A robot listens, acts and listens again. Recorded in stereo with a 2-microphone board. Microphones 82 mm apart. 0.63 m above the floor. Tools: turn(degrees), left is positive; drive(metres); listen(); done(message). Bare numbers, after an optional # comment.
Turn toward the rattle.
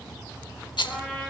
# The rattle: about 70° left or 110° left.
turn(70)
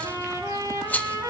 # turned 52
# So it is at 20° left.
turn(20)
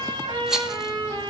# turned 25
done("Facing the rattle, under 1 m away.")